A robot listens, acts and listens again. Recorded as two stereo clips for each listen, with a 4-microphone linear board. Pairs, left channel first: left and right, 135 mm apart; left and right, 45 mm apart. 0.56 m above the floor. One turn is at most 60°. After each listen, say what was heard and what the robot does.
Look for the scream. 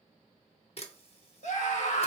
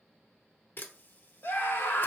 The scream: about 60° left or 120° left. Turn 60° left.
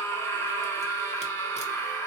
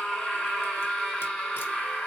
So it is at 25° left. Turn 25° left.
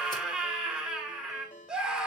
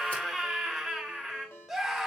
Facing the scream, 1 to 2 m away.